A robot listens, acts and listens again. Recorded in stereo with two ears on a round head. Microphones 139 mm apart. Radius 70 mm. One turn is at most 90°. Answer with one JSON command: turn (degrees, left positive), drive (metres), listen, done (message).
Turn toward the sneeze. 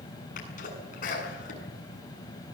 {"turn": 50}
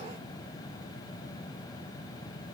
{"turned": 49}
{"listen": true}
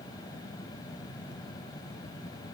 {"done": "I heard a sneeze, but can't make it out now. It was about straight ahead or 80° left."}